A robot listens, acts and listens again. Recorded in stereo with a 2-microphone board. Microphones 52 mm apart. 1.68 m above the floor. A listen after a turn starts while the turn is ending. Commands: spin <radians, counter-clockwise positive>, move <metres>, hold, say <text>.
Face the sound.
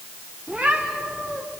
spin -0.52
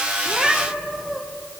say Facing the cat meowing, 2 to 4 m away.